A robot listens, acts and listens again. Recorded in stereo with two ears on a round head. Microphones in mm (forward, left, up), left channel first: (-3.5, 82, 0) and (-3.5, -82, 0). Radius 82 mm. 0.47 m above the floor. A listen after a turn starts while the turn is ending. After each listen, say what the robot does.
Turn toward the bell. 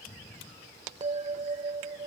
Turn 30° right.
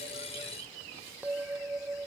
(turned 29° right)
Turn 10° right.
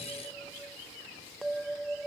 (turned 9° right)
Facing the bell.